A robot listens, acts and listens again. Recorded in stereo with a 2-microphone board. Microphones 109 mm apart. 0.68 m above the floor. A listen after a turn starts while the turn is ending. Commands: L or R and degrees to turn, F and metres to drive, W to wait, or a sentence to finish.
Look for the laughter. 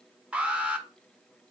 W
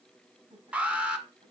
R90
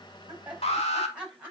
R10
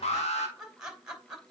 Facing the laughter, 2 to 4 m away.